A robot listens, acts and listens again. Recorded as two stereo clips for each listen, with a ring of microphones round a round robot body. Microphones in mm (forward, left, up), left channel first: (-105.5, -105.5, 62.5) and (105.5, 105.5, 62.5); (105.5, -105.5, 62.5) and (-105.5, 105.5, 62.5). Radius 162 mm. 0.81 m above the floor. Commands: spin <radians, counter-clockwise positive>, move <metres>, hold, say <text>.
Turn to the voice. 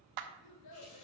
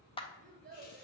spin -2.79
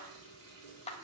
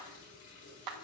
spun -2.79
hold
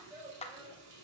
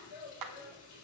spin -0.61
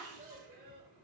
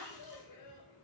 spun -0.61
spin -0.35
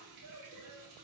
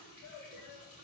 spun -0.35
say Found it: a child speaking, straight ahead, 2 to 4 m away.